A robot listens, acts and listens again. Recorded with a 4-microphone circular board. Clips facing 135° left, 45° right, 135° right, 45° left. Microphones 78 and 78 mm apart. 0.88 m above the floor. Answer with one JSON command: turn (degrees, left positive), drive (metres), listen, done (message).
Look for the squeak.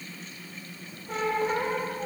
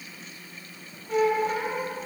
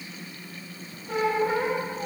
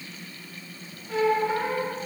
{"turn": 170}
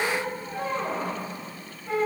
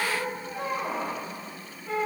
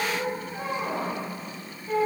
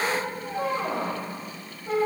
{"turn": 40}
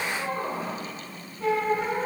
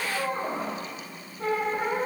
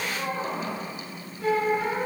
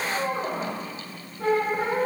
{"done": "Facing the squeak."}